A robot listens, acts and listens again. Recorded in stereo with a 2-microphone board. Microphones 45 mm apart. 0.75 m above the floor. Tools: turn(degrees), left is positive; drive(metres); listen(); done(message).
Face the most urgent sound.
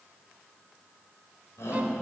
turn(degrees=90)
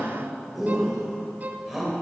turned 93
done("Found it: a shout, straight ahead.")